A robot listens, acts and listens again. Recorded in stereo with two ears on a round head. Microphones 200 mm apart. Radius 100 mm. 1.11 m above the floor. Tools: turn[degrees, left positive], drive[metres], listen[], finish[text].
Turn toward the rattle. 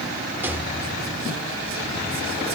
Action: turn[-30]
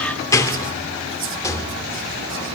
Thought: So it is at 15° left.
Action: turn[15]
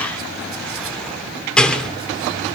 Action: finish[Facing the rattle.]